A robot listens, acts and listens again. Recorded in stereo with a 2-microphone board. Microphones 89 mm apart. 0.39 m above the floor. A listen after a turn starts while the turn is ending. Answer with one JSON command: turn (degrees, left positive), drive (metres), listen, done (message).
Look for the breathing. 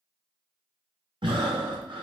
{"turn": -65}
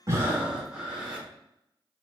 {"turn": -10}
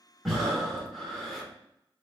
{"done": "Found it: breathing, straight ahead."}